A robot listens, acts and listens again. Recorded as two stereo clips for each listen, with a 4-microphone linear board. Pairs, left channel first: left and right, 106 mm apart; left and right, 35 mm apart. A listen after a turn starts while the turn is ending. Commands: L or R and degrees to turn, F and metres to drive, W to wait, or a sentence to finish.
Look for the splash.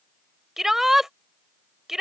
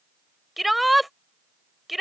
W
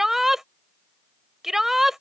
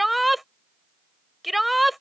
W
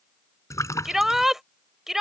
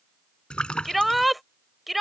L30
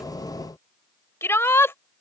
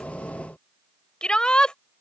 W
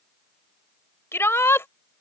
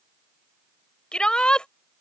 I heard a splash, but can't make it out now. It was about straight ahead or 120° left.